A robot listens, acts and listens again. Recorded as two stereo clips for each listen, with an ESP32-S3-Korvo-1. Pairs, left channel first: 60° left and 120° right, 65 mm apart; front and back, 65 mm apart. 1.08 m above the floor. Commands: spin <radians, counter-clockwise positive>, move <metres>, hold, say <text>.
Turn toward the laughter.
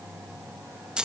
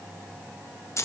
hold
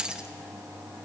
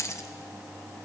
hold
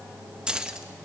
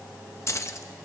say I can't make out laughter to turn to.